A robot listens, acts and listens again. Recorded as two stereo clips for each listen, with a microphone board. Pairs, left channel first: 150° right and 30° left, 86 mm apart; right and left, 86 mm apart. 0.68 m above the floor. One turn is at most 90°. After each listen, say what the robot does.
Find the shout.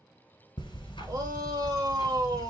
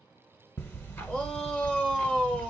Turn 10° right.
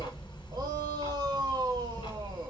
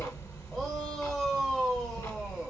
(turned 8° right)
Keep listening.
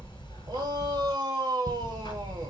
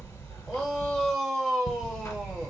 Found it: a shout, straight ahead.